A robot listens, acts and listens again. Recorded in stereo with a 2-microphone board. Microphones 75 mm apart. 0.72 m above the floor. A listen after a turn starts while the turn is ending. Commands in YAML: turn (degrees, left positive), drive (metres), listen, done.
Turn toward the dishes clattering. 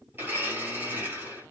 listen: true
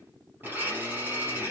listen: true
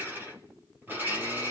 done: "I can't make out dishes clattering, only a blender."